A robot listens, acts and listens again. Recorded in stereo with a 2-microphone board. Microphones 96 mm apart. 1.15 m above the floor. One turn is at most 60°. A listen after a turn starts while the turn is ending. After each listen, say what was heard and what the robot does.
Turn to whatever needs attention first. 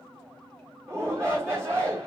The shout: about 30° right or 150° right. Turn 30° right.
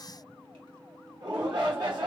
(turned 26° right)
So it is at 120° right. Turn 60° right.
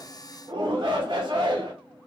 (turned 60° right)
The shout is now 60° right. Turn 60° right.
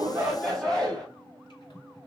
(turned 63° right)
Facing the shout, 1 to 2 m away.